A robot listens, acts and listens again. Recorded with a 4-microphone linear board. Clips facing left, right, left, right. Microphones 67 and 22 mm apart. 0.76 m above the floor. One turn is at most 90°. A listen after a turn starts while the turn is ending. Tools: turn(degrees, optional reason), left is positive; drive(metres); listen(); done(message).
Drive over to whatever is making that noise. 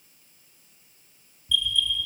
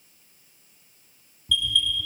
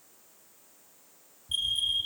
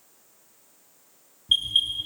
turn(degrees=-70, reason="The alarm: about 70° right or 110° right.")
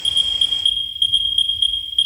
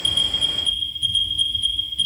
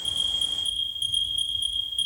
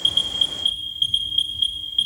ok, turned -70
turn(degrees=-40, reason="So it is at 40° right.")
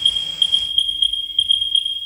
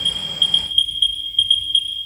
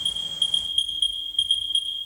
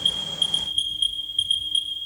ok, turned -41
drive(metres=1.0)
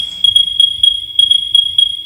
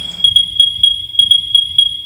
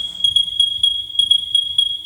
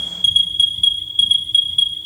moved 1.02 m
drive(metres=1.0)
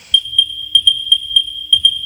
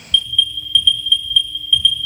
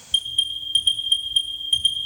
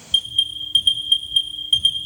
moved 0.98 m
turn(degrees=-10, reason="The alarm is now 10° right.")
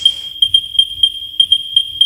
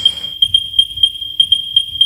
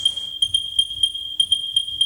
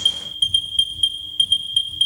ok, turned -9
drive(metres=1.0)
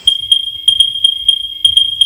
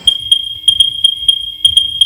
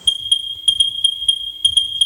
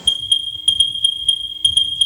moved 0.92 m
drive(metres=1.0)
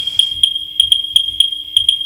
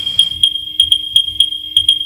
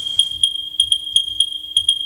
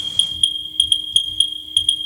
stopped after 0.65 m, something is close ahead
done("I am next to the alarm.")